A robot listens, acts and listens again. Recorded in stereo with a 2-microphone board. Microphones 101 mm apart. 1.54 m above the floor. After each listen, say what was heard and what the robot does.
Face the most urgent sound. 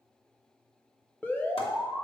The alarm: about 15° left or 165° left. Turn 15° left.
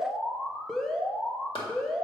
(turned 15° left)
Facing the alarm, 1 to 2 m away.